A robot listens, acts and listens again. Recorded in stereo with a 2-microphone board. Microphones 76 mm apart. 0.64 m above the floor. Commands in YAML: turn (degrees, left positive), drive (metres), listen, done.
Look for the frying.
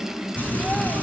turn: 20
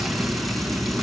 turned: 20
done: "Found it: frying, straight ahead, over 4 m away."